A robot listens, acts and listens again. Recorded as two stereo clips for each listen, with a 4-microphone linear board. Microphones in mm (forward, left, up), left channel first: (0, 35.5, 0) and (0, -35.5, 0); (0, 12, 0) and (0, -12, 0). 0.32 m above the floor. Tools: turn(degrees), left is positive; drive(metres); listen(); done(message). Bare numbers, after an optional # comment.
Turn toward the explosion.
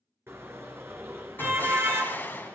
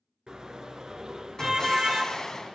# The explosion: about 30° left or 150° left.
turn(30)
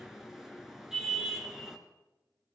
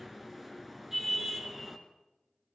listen()
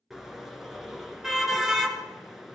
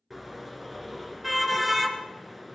done("I heard an explosion, but can't make it out now. It was about straight ahead or 120° left.")